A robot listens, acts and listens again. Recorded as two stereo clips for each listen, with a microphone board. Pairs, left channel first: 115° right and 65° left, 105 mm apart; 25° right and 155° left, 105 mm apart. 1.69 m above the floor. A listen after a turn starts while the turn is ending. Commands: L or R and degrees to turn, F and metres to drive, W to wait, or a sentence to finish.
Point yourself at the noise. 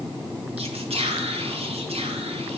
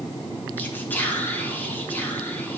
L50
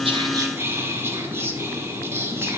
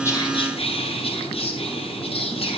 Found it: whispering, straight ahead.